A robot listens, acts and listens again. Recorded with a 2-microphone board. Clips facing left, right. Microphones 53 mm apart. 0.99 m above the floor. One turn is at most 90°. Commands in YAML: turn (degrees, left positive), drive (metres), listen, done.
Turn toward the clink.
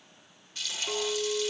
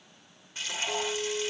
turn: 50
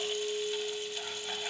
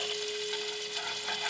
turn: 80
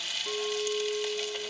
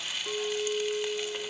turn: -10
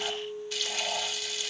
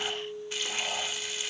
done: "Facing the clink, 1 to 2 m away."